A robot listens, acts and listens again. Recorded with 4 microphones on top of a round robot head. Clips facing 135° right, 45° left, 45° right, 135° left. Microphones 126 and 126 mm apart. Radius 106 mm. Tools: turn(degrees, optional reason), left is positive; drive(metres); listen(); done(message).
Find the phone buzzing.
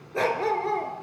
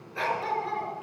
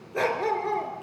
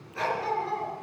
listen()
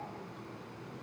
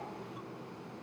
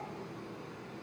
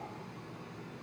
listen()
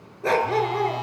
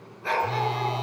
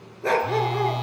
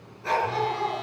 turn(degrees=-15, reason="The phone buzzing: 15° right.")
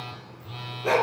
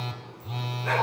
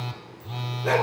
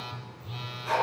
done("Found it: a phone buzzing, straight ahead.")